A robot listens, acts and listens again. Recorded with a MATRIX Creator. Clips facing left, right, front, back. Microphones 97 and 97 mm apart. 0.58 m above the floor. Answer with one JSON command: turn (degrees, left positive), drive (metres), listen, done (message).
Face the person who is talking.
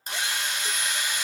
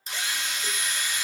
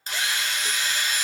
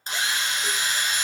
{"listen": true}
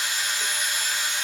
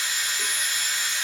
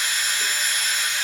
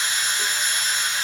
{"listen": true}
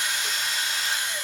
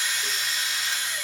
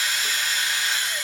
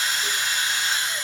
{"done": "I can't make out anyone speaking, only a drill."}